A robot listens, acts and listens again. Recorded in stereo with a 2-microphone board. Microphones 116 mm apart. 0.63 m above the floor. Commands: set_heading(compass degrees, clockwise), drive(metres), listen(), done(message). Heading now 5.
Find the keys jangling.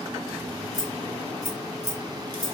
set_heading(290)
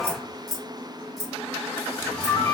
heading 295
done("Found it: keys jangling, straight ahead.")